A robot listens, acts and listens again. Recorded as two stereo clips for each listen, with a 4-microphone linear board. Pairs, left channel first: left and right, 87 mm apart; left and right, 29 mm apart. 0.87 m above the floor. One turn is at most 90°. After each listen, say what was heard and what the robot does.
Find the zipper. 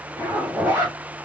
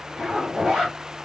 The zipper: about 20° right or 160° right. Turn 20° right.
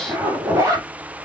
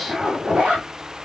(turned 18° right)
So it is at 145° right. Turn 90° right.
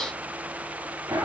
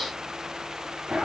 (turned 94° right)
The zipper is now 50° right. Turn 50° right.
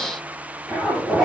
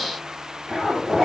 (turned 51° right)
Found it: a zipper, straight ahead.